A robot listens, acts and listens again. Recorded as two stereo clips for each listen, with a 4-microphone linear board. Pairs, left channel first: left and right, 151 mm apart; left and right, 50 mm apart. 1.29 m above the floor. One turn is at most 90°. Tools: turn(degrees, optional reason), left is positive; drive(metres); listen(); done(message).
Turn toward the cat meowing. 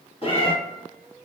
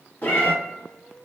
turn(degrees=40, reason="The cat meowing: about 40° left or 140° left.")
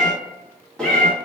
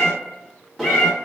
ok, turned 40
done("Facing the cat meowing, 1 to 2 m away.")